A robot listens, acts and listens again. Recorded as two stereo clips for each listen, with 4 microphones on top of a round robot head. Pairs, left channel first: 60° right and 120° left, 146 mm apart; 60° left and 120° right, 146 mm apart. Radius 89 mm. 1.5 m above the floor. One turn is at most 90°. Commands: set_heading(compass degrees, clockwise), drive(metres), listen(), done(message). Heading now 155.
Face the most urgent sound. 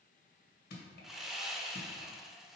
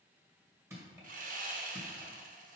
listen()
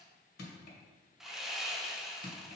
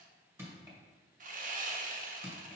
listen()
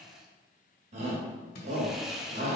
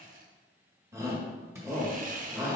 set_heading(65)
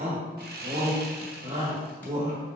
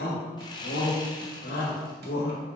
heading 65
set_heading(345)
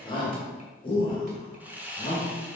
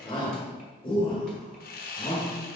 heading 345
done("Found it: a shout, straight ahead, 2 to 4 m away.")